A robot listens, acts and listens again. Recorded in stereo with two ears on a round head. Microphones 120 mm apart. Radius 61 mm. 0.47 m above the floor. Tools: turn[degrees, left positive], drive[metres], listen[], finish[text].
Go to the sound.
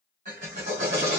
Thought: The drill: about 55° right or 125° right.
Action: turn[-55]
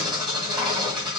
Action: drive[1.0]
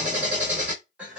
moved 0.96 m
Thought: The drill is now 10° right.
Action: turn[-10]
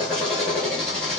Action: drive[1.0]
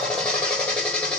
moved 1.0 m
Action: drive[1.0]
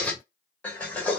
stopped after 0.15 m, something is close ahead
Thought: The drill is now 10° left.
Action: turn[10]
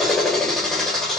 Action: finish[Arrived at the drill, straight ahead.]